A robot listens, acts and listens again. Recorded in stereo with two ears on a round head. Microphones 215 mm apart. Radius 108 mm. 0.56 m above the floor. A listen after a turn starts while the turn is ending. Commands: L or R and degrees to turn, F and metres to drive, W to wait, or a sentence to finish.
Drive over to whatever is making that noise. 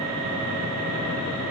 W
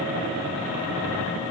W
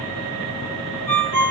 L30
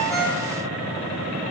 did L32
W
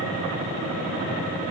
W
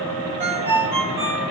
R20
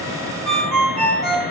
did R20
F1.0
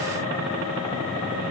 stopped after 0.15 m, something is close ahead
W
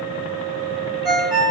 Blocked. The ringtone is further on, straight ahead.